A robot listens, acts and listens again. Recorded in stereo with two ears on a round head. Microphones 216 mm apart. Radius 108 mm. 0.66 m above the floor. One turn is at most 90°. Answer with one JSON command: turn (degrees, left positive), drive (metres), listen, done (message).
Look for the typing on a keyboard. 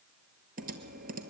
{"turn": -35}
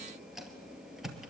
{"done": "Facing the typing on a keyboard."}